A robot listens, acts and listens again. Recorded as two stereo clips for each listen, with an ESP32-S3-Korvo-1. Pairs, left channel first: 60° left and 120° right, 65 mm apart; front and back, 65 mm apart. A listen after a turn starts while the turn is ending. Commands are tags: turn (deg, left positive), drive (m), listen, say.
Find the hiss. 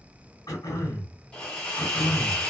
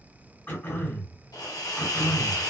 <turn deg="-15"/>
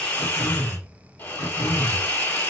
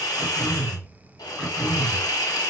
<say>Facing the hiss, 1 to 2 m away.</say>